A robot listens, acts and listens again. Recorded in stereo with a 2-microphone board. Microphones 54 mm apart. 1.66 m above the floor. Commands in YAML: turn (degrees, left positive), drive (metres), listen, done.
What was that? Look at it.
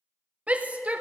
turn: -30
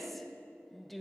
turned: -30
done: "Facing the shout."